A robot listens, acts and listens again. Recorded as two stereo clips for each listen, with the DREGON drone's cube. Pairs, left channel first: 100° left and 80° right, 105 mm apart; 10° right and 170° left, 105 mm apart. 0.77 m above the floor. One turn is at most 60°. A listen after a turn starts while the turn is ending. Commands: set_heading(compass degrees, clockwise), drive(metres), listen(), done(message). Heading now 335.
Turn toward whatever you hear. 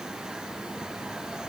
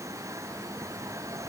listen()
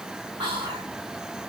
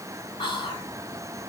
set_heading(25)
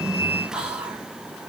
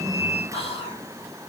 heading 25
done("Facing the whispering.")